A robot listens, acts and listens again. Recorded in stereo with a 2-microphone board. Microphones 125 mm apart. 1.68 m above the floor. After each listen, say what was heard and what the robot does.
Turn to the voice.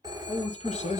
The man speaking: about 60° left or 120° left. Turn 60° left.
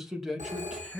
Found it: a man speaking, straight ahead, 1 to 2 m away.